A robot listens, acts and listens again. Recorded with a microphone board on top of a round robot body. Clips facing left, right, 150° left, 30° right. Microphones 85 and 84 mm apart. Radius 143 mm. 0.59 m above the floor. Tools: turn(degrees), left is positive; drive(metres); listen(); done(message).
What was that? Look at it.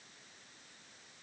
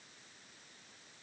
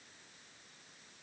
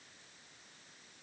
listen()
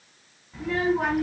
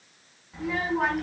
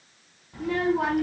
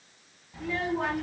turn(degrees=175)
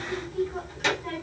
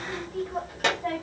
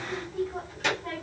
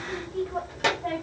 turn(degrees=-55)
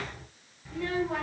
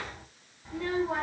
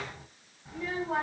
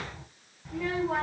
turn(degrees=-25)
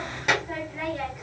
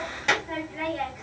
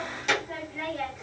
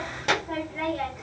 turn(degrees=10)
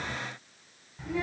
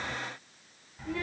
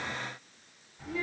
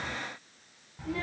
done("Facing the child speaking.")